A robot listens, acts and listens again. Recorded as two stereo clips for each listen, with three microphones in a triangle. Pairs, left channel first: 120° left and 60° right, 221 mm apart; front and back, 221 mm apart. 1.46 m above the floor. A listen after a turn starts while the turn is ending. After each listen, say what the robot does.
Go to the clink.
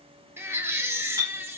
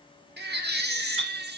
Turn 15° left.
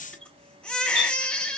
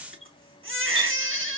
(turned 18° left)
Keep listening.
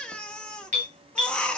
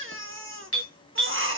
Drive 1.0 m forward.
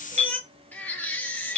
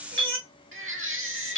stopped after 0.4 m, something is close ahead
Blocked. The clink is further on, straight ahead.